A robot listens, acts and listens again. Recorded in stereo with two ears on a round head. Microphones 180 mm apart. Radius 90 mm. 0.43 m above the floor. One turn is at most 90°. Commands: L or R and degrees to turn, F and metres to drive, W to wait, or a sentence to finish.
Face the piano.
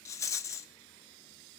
W
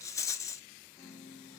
L15
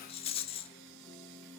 Facing the piano.